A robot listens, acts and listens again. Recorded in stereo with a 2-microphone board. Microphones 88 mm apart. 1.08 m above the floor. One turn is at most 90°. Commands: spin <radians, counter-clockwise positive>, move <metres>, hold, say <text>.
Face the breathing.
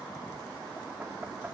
hold
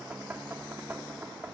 hold
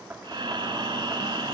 spin -1.13
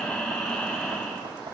say Facing the breathing.